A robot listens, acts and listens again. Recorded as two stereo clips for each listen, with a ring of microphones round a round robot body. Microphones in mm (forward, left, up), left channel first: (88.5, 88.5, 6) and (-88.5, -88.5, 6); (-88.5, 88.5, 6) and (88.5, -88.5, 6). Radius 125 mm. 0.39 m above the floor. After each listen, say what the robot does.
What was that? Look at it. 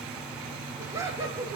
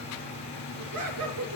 Turn 60° right.
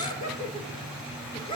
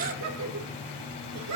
Turn 25° right.
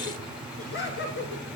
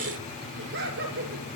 Facing the laughter, over 4 m away.